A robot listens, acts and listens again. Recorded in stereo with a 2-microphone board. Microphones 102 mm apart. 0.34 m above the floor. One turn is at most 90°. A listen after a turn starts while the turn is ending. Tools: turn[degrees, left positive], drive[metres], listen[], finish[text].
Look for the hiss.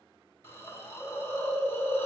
Thought: The hiss: about 25° left or 155° left.
Action: turn[25]
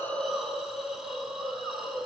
Action: finish[Found it: a hiss, straight ahead, 2 to 4 m away.]